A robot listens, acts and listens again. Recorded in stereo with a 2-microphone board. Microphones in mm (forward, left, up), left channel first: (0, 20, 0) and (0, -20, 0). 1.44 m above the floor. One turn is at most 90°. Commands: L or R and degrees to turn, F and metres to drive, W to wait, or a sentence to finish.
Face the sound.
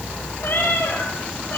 L50
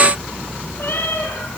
L75
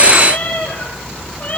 L40
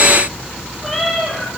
Found it: a cat meowing, straight ahead, over 4 m away.